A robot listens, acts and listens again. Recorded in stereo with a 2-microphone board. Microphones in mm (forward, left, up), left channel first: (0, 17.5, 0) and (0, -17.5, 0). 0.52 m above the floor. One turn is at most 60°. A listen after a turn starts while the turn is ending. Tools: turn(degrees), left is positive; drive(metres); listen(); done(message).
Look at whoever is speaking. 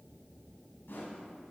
listen()
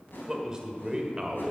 turn(degrees=-20)
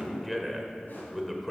done("Found it: a man speaking, straight ahead.")